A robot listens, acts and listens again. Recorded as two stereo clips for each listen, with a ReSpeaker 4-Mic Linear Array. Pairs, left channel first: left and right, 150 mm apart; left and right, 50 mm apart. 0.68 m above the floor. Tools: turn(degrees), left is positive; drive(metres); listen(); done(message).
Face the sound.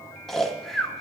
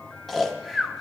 turn(degrees=30)
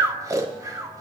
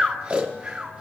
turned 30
turn(degrees=-25)
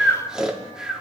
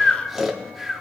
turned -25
done("Facing the snoring.")